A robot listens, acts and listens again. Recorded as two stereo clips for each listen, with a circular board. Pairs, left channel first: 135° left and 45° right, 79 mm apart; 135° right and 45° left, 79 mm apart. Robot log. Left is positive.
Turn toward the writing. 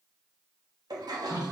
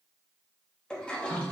cmd idle
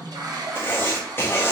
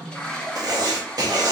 note: The writing: 75° left.
cmd yaw +75
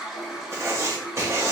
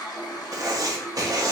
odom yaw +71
end: Found it: writing, straight ahead, under 1 m away.